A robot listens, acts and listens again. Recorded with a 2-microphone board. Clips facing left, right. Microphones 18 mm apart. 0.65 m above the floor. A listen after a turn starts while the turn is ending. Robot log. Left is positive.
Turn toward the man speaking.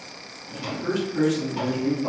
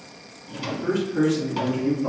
cmd yaw +30
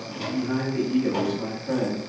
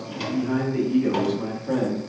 cmd yaw +30
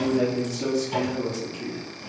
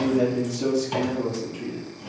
cmd yaw +30
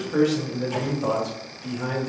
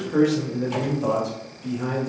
cmd yaw +30
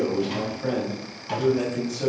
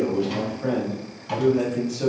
cmd yaw -30
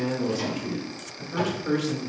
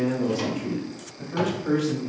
note: So it is at 10° left.
cmd yaw +10
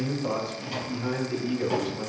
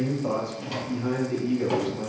end: Facing the man speaking.